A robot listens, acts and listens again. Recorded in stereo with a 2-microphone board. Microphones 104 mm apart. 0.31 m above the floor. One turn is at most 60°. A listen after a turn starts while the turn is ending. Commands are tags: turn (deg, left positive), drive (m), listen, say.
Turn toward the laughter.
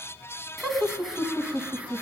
<turn deg="-30"/>
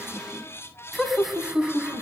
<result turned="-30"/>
<turn deg="-30"/>
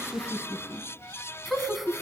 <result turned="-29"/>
<turn deg="-30"/>
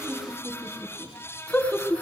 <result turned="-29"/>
<turn deg="10"/>
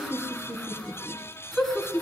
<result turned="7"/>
<say>Found it: laughter, straight ahead.</say>